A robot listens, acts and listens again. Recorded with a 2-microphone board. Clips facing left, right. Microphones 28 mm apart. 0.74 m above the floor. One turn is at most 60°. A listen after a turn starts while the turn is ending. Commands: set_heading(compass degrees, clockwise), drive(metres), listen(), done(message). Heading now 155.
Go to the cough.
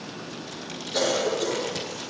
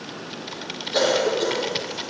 set_heading(185)
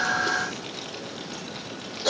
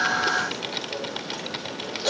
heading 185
drive(1.0)
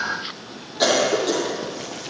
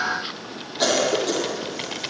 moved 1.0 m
drive(1.0)
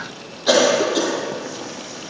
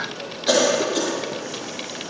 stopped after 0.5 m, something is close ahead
set_heading(175)
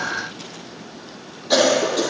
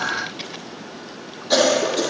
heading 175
done("Arrived at the cough, straight ahead.")